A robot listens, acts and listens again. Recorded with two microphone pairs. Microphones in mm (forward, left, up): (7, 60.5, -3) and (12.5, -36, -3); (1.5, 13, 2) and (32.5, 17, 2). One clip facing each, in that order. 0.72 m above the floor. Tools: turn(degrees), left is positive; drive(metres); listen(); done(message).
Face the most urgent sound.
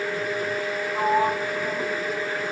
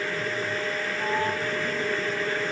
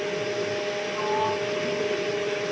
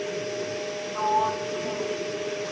listen()
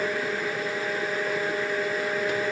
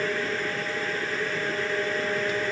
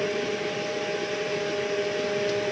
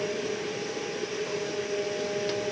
listen()
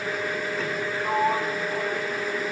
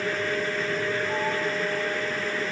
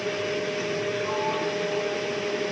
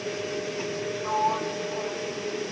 done("I can't make out anything urgent, only a sliding door.")